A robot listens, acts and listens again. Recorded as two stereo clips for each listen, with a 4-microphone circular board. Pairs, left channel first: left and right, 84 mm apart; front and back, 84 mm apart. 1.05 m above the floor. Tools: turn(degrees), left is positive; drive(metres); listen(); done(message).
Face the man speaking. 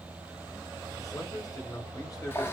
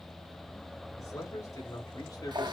turn(degrees=45)
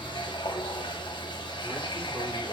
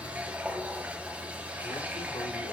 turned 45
listen()
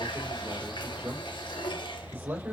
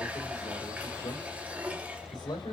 turn(degrees=-20)
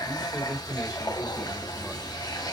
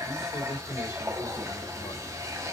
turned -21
done("Found it: a man speaking, straight ahead, 2 to 4 m away.")